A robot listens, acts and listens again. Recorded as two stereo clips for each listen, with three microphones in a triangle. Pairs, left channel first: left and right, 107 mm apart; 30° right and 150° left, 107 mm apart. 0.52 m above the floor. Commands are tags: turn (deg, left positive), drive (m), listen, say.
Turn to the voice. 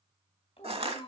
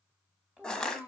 <turn deg="70"/>
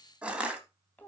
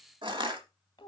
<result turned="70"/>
<turn deg="15"/>
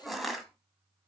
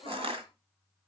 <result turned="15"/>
<say>Found it: a child speaking, straight ahead, 1 to 2 m away.</say>